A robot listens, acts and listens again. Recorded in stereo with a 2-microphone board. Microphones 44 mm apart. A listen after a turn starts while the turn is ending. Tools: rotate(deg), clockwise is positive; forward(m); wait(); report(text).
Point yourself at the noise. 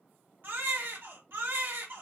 rotate(55)
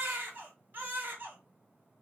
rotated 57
rotate(55)
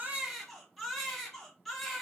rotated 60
report("Facing the baby crying.")